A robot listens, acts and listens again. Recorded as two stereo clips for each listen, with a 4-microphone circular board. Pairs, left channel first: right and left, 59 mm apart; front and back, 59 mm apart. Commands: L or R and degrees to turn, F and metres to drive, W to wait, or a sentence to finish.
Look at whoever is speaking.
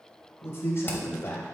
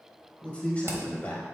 R65
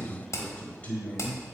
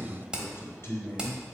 R30
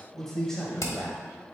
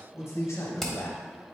R10
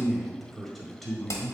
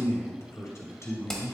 Found it: a man speaking, straight ahead.